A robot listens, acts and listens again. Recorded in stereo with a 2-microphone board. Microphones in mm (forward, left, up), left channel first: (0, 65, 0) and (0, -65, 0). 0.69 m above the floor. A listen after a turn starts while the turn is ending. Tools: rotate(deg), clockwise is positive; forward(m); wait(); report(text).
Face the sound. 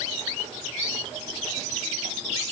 wait()
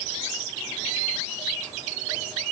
wait()
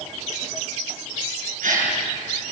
rotate(70)
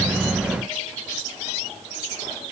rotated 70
wait()
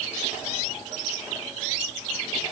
report("I heard a gasp, but can't make it out now. It was about straight ahead or 40° right.")